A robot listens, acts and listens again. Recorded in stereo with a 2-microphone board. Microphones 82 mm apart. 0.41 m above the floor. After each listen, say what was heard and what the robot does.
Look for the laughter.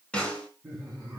The laughter: about 30° right or 150° right. Turn 30° right.
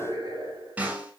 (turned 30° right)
So it is at 120° right. Turn 120° right.
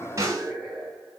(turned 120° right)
Facing the laughter, over 4 m away.